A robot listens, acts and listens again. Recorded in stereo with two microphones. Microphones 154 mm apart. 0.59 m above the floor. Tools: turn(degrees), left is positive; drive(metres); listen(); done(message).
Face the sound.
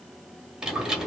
turn(degrees=-30)
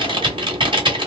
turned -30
turn(degrees=-145)
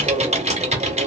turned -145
turn(degrees=-50)
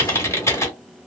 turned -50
turn(degrees=20)
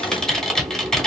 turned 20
done("Found it: typing on a keyboard, straight ahead, 1 to 2 m away.")